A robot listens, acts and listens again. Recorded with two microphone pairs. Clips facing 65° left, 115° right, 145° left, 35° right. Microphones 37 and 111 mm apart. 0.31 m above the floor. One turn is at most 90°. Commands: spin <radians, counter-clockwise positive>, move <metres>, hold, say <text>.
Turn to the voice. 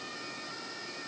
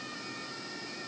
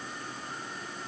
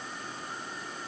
hold
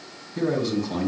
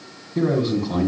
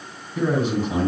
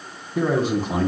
spin -1.31
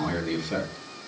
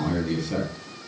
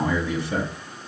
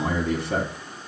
spin -0.26
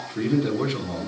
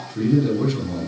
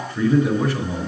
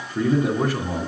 say Facing the man speaking, 2 to 4 m away.